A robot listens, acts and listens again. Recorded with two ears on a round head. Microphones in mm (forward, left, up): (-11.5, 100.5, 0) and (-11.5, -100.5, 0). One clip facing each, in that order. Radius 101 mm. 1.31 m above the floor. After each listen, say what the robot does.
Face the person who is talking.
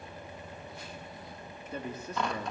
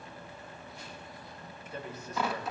Turn 90° left.
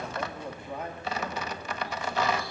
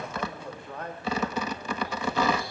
Turn 10° left.
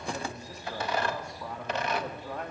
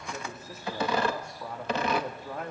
Facing the man speaking.